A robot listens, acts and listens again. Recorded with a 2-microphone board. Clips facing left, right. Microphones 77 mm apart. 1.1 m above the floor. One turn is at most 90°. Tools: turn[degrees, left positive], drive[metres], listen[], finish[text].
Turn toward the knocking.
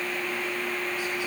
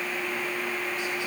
Action: listen[]
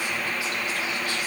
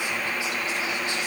Action: listen[]
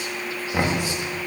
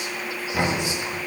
Thought: The knocking: about 20° left or 160° left.
Action: turn[20]
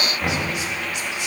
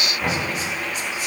Action: finish[Found it: knocking, straight ahead, 1 to 2 m away.]